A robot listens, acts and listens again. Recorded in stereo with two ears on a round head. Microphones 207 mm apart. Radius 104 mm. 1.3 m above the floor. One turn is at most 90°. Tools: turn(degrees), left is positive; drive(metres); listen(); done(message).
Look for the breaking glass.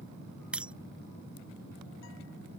turn(degrees=-30)
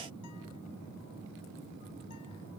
listen()
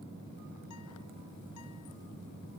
done("I heard breaking glass, but can't make it out now. It was about 25° left or 145° right.")